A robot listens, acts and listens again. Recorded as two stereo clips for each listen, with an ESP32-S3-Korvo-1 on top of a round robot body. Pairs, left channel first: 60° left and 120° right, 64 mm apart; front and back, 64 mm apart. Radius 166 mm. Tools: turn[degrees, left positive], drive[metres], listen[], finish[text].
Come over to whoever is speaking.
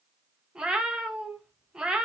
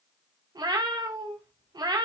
Action: listen[]
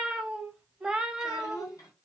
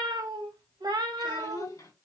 Thought: The child speaking: 25° left.
Action: turn[25]
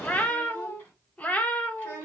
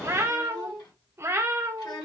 Action: drive[1.0]
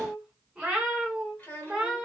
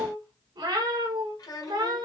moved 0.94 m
Action: drive[1.0]
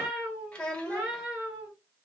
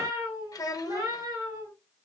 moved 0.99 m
Thought: The child speaking is now 10° right.
Action: turn[-10]
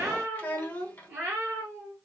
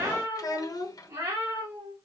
Action: drive[1.0]
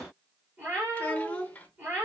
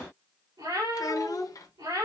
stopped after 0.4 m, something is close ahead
Action: finish[Arrived at the child speaking, straight ahead.]